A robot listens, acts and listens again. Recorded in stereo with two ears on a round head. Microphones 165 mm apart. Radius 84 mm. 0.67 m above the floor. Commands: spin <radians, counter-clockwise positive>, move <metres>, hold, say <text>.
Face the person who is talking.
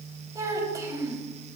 spin -0.35
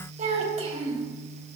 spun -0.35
spin -2.44
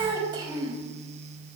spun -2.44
spin -0.44
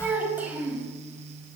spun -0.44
spin -0.17
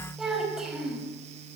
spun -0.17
say Facing the child speaking, 2 to 4 m away.